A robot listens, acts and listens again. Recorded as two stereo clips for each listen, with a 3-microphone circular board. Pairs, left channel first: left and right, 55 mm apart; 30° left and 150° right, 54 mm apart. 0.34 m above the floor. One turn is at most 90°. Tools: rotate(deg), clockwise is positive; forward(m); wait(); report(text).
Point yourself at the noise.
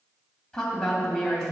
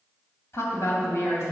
rotate(-15)
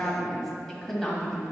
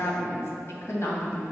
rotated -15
rotate(-10)
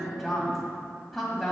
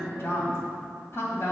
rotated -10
report("Facing the woman speaking.")